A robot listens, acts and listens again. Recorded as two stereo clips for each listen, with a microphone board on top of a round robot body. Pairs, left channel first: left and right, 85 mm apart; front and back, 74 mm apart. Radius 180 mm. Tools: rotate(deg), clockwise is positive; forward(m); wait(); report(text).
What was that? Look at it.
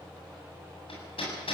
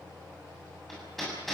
rotate(-90)
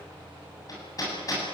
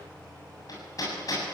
rotate(-40)
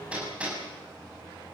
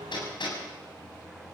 rotate(15)
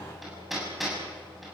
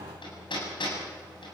report("Facing the hammering, over 4 m away.")